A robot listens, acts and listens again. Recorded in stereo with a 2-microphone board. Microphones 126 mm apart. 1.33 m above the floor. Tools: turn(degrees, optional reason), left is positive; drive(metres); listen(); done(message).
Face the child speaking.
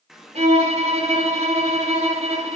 listen()
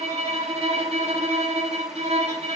listen()
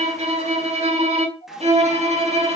turn(degrees=90)
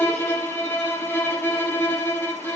listen()
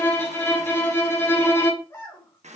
turn(degrees=15, reason="The child speaking is now 15° left.")
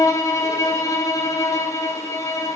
listen()
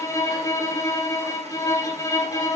listen()
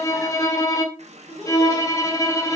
done("Facing the child speaking, 2 to 4 m away.")